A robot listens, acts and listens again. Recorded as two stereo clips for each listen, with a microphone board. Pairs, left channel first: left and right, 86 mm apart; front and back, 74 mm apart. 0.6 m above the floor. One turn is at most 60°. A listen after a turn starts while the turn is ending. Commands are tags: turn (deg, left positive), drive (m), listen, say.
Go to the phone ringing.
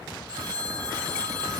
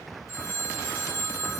<turn deg="-45"/>
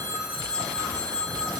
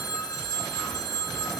<turn deg="15"/>
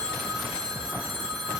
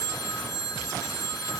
<drive m="1.0"/>
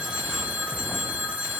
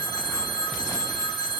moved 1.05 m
<drive m="1.0"/>
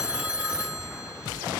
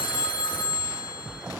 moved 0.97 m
<turn deg="-10"/>
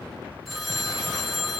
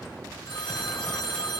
<drive m="1.0"/>
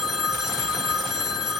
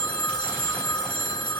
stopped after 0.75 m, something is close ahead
<say>Arrived at the phone ringing, straight ahead.</say>